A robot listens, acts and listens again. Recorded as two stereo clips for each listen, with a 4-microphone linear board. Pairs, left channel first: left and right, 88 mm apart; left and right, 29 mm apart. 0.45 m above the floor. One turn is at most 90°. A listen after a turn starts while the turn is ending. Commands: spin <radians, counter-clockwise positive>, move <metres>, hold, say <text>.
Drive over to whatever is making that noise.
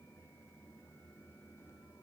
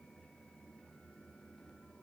hold
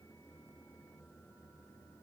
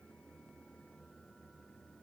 hold
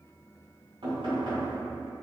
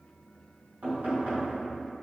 spin -1.13
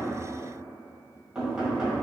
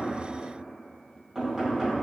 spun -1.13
spin -0.17
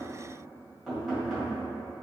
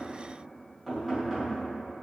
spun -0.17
move 1.0
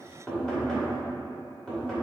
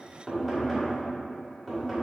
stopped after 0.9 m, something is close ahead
spin 0.17
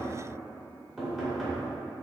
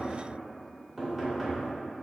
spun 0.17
say I am next to the knocking.